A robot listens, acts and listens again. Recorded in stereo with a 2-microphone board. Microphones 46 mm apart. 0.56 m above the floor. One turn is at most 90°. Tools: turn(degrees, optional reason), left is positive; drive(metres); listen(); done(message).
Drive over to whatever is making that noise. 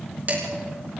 turn(degrees=-40, reason="The dishes clattering: about 40° right or 140° right.")
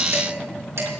turn(degrees=-90, reason="So it is at 95° right.")
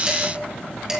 turn(degrees=-15, reason="The dishes clattering is now 15° right.")
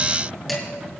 listen()
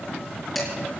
drive(metres=1.0)
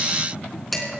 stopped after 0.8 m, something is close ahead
done("Blocked. The dishes clattering is further on, straight ahead.")